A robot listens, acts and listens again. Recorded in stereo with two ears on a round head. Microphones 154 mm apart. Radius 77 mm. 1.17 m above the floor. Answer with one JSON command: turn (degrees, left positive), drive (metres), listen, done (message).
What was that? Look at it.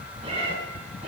{"turn": -35}
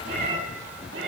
{"turn": -105}
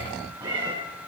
{"turn": -25}
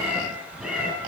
{"turn": -10}
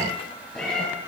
{"done": "Facing the cat meowing, over 4 m away."}